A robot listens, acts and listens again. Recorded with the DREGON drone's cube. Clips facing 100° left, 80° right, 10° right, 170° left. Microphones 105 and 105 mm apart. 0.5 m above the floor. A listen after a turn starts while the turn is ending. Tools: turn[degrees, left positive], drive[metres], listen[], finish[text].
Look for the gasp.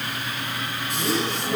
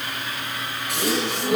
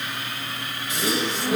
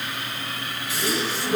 Thought: The gasp: 85° right.
Action: turn[-85]
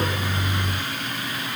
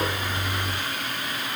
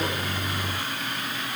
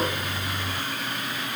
Action: finish[Facing where the gasp came from. I can't hear it now.]